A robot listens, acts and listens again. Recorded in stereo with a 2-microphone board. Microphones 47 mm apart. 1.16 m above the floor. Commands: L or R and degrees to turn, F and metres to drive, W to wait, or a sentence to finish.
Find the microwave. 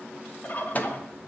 L35
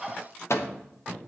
L105
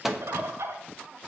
Found it: a microwave, straight ahead.